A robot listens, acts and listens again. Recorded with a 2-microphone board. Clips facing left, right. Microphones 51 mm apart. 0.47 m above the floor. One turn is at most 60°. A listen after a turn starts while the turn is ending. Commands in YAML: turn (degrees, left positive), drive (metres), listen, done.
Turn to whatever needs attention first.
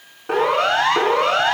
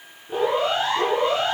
turn: 60
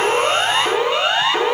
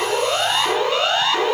turn: 15
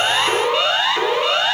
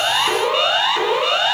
done: "Found it: a siren, straight ahead."